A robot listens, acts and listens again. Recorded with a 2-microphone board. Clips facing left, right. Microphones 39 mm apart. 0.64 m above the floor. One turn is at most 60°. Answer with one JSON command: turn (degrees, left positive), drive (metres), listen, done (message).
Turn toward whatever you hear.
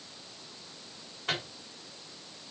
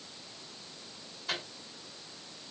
{"turn": 60}
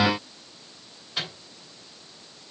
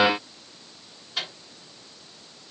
{"done": "Found it: a microwave, straight ahead."}